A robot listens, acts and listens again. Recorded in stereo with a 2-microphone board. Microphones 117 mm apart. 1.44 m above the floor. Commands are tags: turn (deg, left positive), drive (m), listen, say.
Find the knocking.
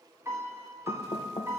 <turn deg="50"/>
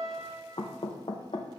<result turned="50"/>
<turn deg="65"/>
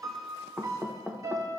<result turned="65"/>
<turn deg="-10"/>
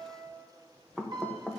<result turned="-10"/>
<say>Found it: knocking, straight ahead.</say>